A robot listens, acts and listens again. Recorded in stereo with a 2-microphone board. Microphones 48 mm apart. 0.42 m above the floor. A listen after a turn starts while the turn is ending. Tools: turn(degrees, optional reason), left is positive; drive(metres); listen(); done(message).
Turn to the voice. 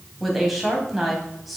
turn(degrees=30)
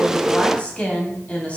turn(degrees=150, reason="So it is at 150° left.")
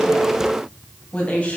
turn(degrees=25, reason="The woman speaking is now 25° left.")
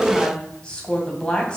turn(degrees=20, reason="The woman speaking is now 20° left.")
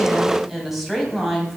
done("Found it: a woman speaking, straight ahead.")